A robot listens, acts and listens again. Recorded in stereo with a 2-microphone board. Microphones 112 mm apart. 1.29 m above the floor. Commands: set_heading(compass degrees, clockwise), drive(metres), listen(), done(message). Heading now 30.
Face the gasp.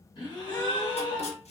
set_heading(345)
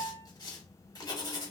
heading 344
listen()
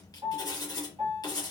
done("I heard a gasp, but can't make it out now. It was about 5° right or 90° left.")